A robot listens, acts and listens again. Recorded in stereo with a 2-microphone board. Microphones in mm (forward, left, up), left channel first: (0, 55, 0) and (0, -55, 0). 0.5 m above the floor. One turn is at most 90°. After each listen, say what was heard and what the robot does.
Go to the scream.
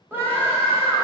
The scream: about 20° right or 160° right. Turn 20° right.
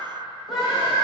Drive 1.0 m forward.
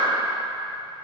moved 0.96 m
Keep listening.
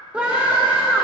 The scream is now 15° right. Turn 15° right.
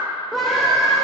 Drive 1.0 m forward.
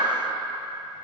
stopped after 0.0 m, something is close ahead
Keep listening.
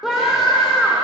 I am next to the scream.